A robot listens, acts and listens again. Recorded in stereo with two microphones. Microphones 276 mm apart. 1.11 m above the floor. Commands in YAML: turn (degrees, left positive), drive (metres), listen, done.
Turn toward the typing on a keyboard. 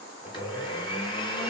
listen: true
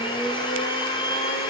listen: true
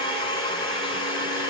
done: "I can't make out typing on a keyboard, only a blender."